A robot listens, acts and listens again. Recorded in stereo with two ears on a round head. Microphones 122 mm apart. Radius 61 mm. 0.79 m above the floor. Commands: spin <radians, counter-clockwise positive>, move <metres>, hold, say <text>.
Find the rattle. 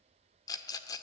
spin 0.44
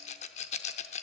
spin 2.18
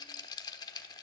spin 0.52
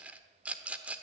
spin -0.17
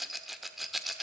say Facing the rattle.